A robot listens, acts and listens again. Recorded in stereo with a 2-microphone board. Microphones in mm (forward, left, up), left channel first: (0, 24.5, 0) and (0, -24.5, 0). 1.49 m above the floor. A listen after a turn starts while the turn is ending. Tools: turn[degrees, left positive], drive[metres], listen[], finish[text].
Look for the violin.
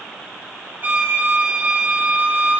Thought: The violin: about 35° right or 145° right.
Action: turn[-35]
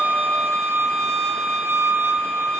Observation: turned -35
Thought: So it is at 110° right.
Action: turn[-110]
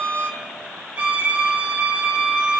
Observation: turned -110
Thought: The violin is now 30° right.
Action: turn[-30]
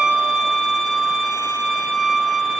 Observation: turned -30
Action: finish[Facing the violin.]